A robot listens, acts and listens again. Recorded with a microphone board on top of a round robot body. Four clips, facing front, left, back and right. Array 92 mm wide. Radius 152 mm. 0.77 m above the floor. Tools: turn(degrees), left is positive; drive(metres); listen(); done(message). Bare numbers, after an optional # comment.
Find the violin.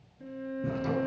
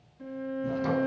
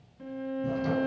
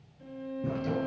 # The violin: 150° left.
turn(150)
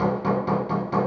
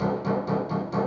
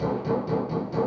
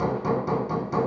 listen()
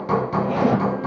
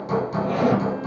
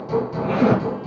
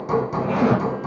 listen()
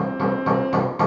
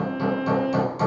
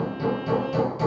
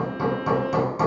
# The violin is now 50° left.
turn(50)
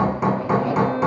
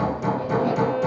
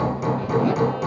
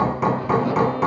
listen()
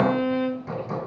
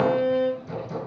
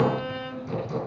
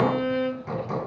# The violin is now 20° left.
turn(20)
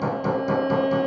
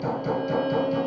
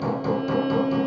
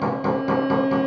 done("Found it: a violin, straight ahead.")